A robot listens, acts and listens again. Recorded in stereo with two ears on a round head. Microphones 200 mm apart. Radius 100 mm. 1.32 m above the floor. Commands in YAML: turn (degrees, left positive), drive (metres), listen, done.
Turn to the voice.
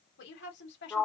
turn: 55
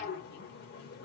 listen: true
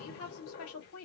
turn: 70
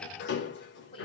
turn: 25
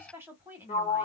turn: -10
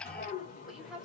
done: "Facing the woman speaking, 2 to 4 m away."